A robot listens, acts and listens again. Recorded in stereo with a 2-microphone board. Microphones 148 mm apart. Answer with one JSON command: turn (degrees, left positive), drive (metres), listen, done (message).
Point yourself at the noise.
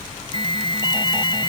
{"turn": 35}
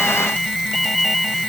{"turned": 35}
{"done": "Found it: an alarm, straight ahead."}